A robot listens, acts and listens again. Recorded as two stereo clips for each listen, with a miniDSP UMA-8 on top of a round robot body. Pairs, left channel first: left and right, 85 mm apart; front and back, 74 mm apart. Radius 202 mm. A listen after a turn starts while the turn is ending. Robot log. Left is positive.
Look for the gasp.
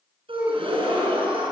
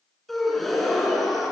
note: The gasp: 90° right.
cmd yaw -90
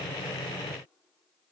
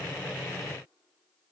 end: Facing where the gasp came from. I can't hear it now.